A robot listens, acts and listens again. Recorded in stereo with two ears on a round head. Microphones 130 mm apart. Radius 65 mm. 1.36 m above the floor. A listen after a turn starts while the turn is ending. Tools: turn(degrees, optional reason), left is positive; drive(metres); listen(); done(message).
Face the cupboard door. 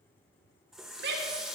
listen()
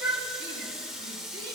listen()
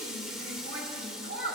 done("I can't make out a cupboard door to turn to.")